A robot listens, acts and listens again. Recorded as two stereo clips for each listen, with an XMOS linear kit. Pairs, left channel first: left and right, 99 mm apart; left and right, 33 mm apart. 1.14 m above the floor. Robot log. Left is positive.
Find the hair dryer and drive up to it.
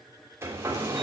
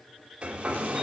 note: The hair dryer: about 30° right or 150° right.
cmd yaw -30
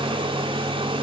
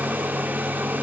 note: So it is at 120° right.
cmd yaw -120
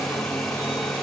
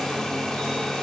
cmd fwd 1.0
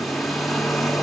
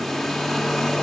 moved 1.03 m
cmd fwd 1.0
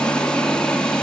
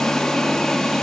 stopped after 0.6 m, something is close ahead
note: The hair dryer is now 10° left.
cmd yaw +10
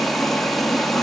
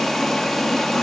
end: Arrived at the hair dryer, straight ahead.